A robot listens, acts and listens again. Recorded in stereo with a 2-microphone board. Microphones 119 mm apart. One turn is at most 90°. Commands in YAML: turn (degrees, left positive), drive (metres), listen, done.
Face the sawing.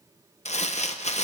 listen: true
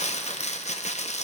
listen: true
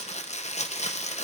done: "I can't make out sawing to turn to."